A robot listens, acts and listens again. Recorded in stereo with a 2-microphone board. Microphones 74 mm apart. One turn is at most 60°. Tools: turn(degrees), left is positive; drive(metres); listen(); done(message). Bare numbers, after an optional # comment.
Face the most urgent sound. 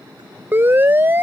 # The siren: about 30° right or 150° right.
turn(-30)
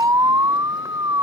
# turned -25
# So it is at 125° right.
turn(-60)
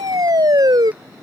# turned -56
# The siren is now 70° right.
turn(-60)
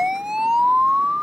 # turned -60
# The siren is now 10° right.
turn(-10)
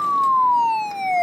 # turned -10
done("Found it: a siren, straight ahead.")